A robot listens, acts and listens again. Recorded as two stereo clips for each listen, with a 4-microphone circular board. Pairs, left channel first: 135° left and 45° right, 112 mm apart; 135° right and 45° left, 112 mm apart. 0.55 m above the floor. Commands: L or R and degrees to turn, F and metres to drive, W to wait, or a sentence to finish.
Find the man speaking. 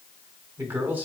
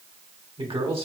L25
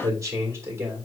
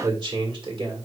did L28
L20
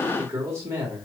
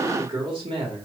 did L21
L20
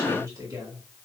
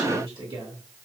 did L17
L15
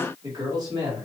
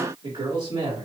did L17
L10
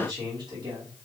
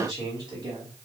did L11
Found it: a man speaking, straight ahead, 2 to 4 m away.